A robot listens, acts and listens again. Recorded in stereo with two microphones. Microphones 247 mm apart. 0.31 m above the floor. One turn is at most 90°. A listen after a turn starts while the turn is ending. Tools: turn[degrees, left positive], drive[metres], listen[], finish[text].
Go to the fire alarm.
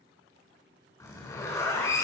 Action: listen[]
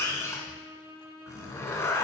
Action: listen[]
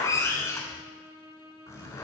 Action: finish[I can't make out a fire alarm to turn to.]